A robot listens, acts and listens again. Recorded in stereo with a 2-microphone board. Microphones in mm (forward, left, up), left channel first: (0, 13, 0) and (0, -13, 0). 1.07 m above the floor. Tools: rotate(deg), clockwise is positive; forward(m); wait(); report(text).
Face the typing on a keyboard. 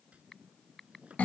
rotate(-30)
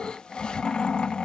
wait()
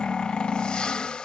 wait()
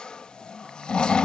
report("I heard typing on a keyboard, but can't make it out now. It was about 25° right or 145° left.")